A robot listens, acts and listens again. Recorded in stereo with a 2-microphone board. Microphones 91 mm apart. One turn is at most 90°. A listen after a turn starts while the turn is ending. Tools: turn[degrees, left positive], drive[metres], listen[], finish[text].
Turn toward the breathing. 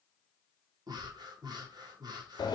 Thought: The breathing: about 55° right or 125° right.
Action: turn[-55]
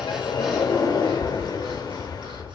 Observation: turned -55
Action: listen[]
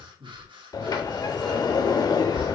Thought: So it is at 75° right.
Action: turn[-75]
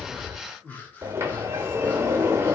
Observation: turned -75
Thought: The breathing is now 25° left.
Action: turn[25]
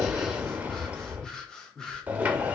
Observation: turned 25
Thought: The breathing is now 10° left.
Action: turn[10]
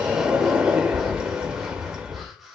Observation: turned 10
Action: finish[Found it: breathing, straight ahead, under 1 m away.]